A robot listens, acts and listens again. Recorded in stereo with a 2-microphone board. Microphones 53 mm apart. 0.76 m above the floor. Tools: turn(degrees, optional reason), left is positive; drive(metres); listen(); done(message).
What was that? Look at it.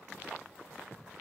listen()
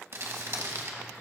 turn(degrees=-60, reason="The crumpling: about 60° right or 120° right.")
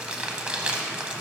turn(degrees=-25, reason="So it is at 25° right.")
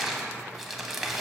done("Found it: crumpling, straight ahead, under 1 m away.")